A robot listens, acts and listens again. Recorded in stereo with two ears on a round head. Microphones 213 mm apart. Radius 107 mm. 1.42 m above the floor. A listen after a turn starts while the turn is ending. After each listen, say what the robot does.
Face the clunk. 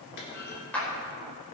Turn 45° left.
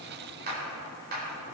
Keep listening.
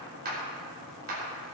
I heard a clunk, but can't make it out now. It was about straight ahead or 90° left.